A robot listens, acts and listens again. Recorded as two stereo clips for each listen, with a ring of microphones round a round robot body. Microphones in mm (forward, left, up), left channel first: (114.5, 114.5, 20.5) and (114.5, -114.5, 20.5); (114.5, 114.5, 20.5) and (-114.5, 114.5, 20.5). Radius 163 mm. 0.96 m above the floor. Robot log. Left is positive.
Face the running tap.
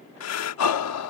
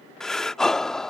cmd idle
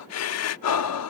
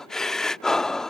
cmd idle
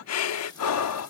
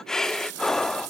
note: The running tap: 170° left.
cmd yaw +170
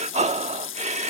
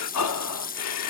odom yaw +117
note: The running tap is now 55° left.
cmd yaw +55
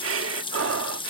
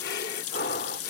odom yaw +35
note: The running tap is now 20° left.
cmd yaw +20
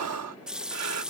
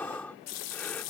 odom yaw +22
end: Found it: a running tap, straight ahead.